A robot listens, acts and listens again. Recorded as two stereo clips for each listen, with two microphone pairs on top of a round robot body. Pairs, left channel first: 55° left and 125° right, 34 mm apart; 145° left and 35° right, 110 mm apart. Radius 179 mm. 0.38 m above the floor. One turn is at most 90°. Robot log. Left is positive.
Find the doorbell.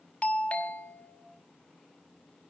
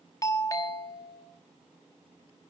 note: The doorbell: 95° left.
cmd yaw +90
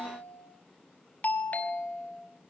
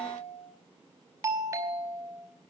note: The doorbell is now 30° left.
cmd yaw +30
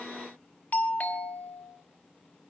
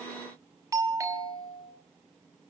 note: The doorbell is now 25° left.
cmd yaw +25
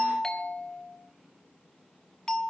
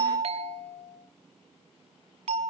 note: The doorbell is now 10° right.
cmd yaw -10
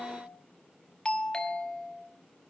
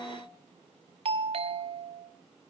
end: Facing the doorbell, 2 to 4 m away.